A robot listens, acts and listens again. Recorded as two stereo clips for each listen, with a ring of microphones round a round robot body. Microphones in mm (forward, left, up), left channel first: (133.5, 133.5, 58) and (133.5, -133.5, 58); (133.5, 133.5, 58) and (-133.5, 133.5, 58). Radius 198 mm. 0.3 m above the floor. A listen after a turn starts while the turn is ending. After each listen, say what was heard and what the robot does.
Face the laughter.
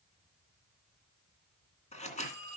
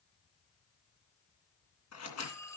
Keep listening.
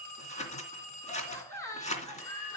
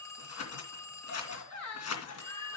The laughter: 15° left. Turn 15° left.
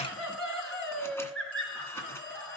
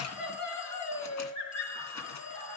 Facing the laughter, over 4 m away.